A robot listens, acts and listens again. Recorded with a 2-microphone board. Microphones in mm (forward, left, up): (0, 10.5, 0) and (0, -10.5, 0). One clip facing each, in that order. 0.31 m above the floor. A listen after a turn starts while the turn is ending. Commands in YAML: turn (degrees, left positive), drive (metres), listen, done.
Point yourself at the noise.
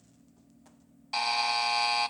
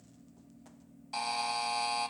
turn: 35
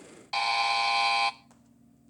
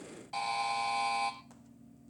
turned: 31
turn: 110
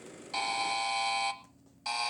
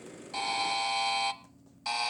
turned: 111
done: "Found it: a buzzer, straight ahead, under 1 m away."